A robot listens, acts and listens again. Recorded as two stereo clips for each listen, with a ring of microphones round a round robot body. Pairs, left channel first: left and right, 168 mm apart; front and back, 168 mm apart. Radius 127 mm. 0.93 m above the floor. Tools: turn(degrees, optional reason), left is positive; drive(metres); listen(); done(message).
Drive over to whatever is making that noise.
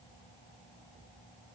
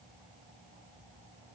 listen()
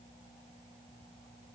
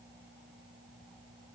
listen()
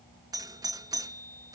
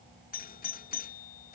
turn(degrees=-25, reason="The doorbell: 25° right.")
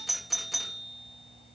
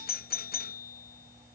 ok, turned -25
drive(metres=1.0)
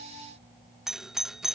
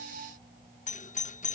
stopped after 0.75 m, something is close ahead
done("I am next to the doorbell.")